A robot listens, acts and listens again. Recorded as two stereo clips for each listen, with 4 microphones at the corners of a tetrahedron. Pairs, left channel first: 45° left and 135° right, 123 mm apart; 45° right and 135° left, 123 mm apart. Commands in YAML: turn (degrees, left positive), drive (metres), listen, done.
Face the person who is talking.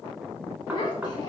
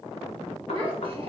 turn: 95
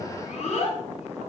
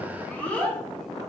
turn: 35
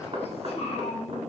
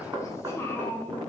turn: 30
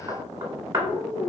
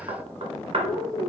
turn: 40
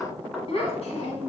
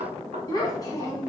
turn: 15
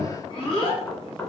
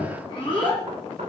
done: "Found it: a child speaking, straight ahead, 1 to 2 m away."